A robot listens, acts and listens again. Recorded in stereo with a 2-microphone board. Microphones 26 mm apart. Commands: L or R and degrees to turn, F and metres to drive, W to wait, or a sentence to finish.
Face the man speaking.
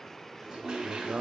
R65
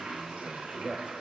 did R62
R15
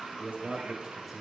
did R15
Found it: a man speaking, straight ahead, 1 to 2 m away.